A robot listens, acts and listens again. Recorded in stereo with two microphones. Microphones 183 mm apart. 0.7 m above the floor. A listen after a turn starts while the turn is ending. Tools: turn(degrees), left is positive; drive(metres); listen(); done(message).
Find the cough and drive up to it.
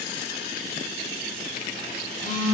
listen()
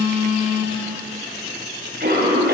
turn(degrees=-65)
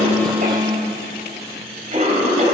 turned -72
turn(degrees=-40)
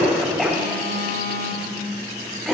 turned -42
drive(metres=1.0)
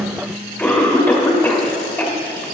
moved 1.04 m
turn(degrees=10)
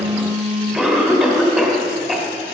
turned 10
drive(metres=1.0)
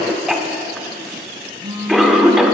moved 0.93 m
drive(metres=1.0)
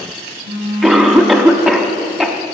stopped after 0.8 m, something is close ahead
done("I am next to the cough.")